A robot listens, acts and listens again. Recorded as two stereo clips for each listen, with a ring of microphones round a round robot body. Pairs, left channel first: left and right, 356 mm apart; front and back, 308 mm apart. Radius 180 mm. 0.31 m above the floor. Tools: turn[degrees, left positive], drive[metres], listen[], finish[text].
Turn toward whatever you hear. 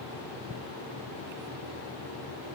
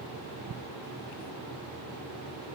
Action: listen[]
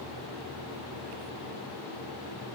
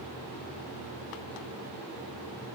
Action: listen[]
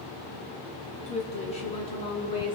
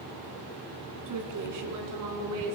Thought: The woman speaking: 165° left.
Action: turn[165]
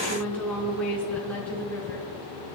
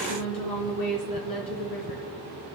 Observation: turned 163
Action: finish[Facing the woman speaking, 2 to 4 m away.]